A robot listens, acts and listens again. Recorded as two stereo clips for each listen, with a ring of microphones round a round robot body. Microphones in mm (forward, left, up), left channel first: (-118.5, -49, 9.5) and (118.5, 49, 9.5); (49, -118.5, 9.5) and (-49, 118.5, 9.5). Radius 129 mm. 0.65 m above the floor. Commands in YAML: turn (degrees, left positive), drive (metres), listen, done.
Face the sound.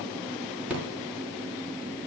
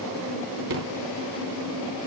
turn: 110
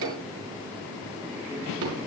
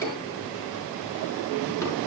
turn: 15
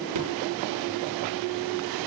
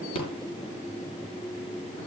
done: "Facing the rattle."